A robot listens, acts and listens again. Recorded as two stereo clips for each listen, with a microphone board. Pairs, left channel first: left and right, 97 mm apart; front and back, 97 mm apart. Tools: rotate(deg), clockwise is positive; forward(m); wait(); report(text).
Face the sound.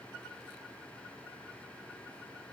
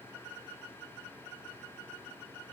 wait()
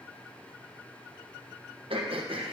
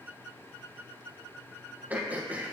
rotate(105)
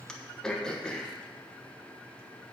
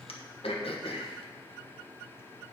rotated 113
report("Found it: throat clearing, straight ahead.")